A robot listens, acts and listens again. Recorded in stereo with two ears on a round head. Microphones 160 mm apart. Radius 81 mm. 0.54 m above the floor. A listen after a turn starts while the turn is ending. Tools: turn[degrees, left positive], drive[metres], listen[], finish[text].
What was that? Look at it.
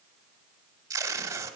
Thought: The tape being pulled: about 20° right or 160° right.
Action: turn[-20]
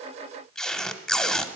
Action: finish[Facing the tape being pulled, under 1 m away.]